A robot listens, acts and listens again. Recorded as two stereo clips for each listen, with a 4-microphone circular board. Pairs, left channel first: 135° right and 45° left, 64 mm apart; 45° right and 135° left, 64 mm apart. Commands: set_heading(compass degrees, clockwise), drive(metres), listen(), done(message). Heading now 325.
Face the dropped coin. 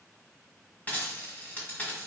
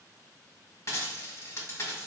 set_heading(45)
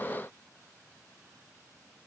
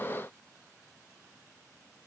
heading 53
set_heading(43)
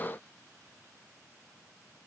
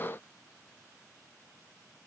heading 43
done("Facing where the dropped coin came from. I can't hear it now.")